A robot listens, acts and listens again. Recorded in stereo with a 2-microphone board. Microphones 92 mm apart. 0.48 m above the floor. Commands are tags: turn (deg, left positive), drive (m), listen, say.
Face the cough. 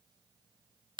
<listen/>
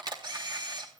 <listen/>
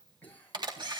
<turn deg="20"/>
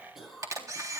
<say>Found it: a cough, straight ahead.</say>